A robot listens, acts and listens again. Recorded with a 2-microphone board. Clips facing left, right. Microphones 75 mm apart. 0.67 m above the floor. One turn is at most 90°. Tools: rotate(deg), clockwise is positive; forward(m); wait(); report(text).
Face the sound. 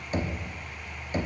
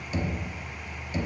rotate(-50)
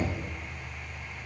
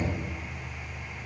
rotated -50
rotate(-65)
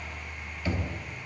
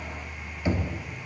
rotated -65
rotate(25)
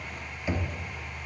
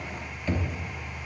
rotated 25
rotate(-15)
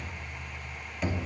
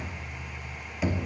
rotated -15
report("Facing the knocking, under 1 m away.")